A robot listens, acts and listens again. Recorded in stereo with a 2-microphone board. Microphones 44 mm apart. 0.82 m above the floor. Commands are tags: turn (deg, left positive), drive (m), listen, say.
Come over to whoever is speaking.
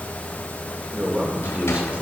<turn deg="-30"/>
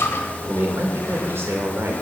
<turn deg="-115"/>
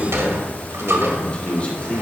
<turn deg="30"/>
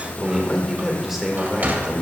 <drive m="1.0"/>
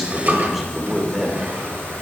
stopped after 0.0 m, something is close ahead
<say>Something is in my way. I am facing the man speaking but have not reached it.</say>